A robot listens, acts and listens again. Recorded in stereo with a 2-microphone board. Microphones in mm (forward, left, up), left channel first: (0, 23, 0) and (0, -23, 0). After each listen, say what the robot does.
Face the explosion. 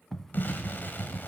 Turn 45° left.
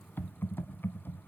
Keep listening.
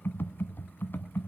I heard an explosion, but can't make it out now. It was about straight ahead or 90° left.